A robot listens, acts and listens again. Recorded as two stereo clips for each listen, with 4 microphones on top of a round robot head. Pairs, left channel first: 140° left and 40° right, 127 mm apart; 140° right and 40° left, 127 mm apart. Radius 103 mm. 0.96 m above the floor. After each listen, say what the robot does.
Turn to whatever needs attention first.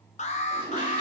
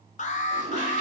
Turn 180° left.
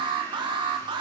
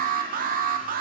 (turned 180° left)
Turn 20° left.
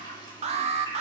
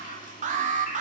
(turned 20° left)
Found it: an alarm, straight ahead, under 1 m away.